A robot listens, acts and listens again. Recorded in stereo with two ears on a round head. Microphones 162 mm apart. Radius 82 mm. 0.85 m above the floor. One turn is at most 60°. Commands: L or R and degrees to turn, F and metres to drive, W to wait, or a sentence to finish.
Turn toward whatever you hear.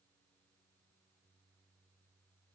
W
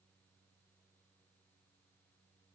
W
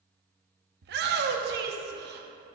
R60
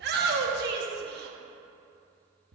R55
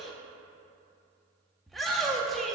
Found it: a shout, straight ahead, under 1 m away.